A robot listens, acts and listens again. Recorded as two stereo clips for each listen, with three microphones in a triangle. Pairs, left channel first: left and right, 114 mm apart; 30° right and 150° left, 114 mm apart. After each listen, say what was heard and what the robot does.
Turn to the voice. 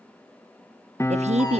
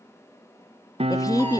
The woman speaking: 90° right. Turn 90° right.
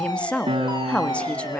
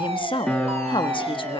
The woman speaking is now 10° left. Turn 10° left.
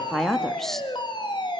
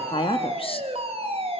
Facing the woman speaking, 1 to 2 m away.